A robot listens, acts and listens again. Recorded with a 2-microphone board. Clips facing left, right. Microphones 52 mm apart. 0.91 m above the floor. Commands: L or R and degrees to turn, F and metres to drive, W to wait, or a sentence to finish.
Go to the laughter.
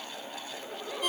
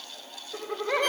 R75
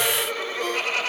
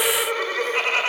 R30
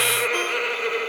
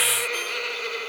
L20
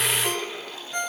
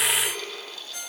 L10
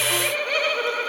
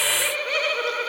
F1.0
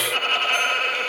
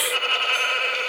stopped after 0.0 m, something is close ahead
Something is in my way. I am facing the laughter but have not reached it.